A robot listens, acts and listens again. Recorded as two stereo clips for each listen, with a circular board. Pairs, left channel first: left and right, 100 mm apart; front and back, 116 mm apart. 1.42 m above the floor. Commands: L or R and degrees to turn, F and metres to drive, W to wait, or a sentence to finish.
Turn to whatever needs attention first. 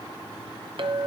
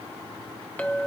W
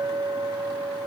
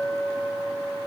W
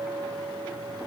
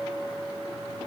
I can't make out anything urgent, only a clink.